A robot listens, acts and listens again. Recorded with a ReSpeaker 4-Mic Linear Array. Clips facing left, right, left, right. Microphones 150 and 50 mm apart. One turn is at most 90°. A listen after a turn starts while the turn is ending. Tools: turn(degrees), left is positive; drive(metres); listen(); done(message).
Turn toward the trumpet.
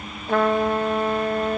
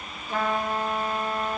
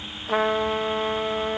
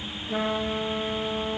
turn(degrees=65)
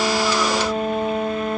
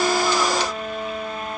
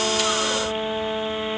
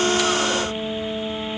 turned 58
turn(degrees=60)
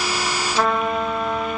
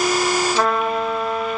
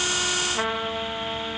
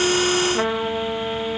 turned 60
done("Facing the trumpet, under 1 m away.")